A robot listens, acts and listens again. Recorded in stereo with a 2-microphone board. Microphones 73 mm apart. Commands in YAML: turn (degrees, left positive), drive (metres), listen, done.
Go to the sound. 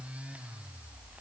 listen: true
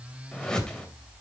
turn: 30
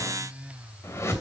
turn: 140
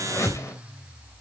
turn: 45
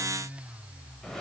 drive: 1.0
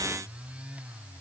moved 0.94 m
listen: true
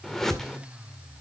drive: 1.0
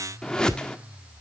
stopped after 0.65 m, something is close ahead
turn: 10
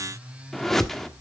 done: "Arrived at the whoosh, straight ahead."